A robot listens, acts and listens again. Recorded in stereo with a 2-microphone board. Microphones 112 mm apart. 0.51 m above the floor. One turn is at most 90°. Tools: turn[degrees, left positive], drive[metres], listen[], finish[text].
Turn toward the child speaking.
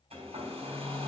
Action: listen[]
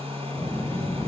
Thought: The child speaking: about 35° left or 145° left.
Action: turn[35]
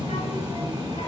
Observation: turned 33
Thought: So it is at 110° left.
Action: turn[90]
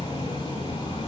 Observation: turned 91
Thought: The child speaking is now 15° left.
Action: turn[15]
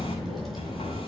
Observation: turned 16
Action: finish[Found it: a child speaking, straight ahead.]